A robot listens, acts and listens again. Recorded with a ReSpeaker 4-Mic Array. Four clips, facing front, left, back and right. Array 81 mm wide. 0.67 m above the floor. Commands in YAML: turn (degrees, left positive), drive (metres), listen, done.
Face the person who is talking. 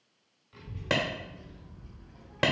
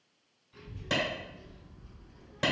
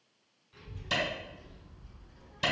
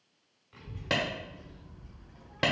turn: -65
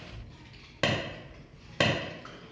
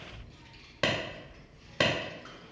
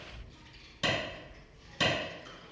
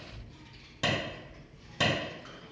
done: "Facing the child speaking."